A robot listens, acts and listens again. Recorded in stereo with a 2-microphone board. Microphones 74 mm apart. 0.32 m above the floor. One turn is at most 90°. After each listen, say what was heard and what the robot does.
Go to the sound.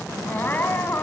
The crying: about 25° left or 155° left. Turn 25° left.
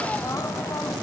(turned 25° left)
Keep listening.
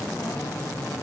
Keep listening.
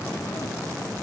I heard crying, but can't make it out now. It was about straight ahead or 130° left. I did not reach it.